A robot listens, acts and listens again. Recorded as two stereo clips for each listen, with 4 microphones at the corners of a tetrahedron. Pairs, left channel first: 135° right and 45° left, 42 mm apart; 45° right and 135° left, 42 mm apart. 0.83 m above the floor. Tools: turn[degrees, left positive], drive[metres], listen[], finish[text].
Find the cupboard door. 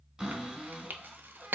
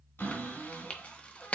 Thought: The cupboard door: 25° right.
Action: turn[-25]
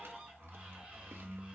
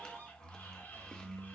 Thought: The cupboard door is now 15° right.
Action: turn[-15]
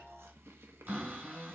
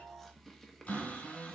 Action: finish[Found it: a cupboard door, straight ahead.]